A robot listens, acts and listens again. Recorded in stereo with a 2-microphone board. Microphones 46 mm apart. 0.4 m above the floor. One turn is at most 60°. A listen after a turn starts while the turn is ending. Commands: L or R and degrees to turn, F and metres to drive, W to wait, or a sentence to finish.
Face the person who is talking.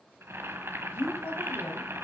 L60
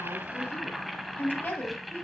L50
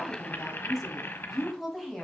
Facing the woman speaking.